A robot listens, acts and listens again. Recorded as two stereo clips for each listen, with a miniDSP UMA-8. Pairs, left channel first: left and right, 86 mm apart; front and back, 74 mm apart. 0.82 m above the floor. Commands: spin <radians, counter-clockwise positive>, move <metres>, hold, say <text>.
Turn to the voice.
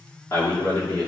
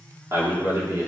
spin 2.44
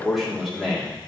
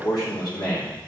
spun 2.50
say Found it: a man speaking, straight ahead.